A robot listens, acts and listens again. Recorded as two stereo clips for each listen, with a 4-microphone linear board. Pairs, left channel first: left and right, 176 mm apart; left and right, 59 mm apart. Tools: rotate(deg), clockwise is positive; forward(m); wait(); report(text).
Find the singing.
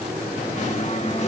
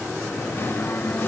rotate(-40)
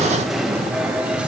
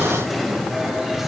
report("Facing the singing.")